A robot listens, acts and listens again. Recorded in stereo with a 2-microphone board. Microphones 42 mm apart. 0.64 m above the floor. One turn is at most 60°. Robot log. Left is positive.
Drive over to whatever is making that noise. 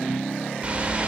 note: The whoosh: about 30° right or 150° right.
cmd yaw -30
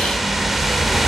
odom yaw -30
cmd fwd 1.0
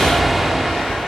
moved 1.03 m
cmd fwd 1.0
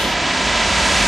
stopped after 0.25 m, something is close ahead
end: Arrived at the whoosh, straight ahead.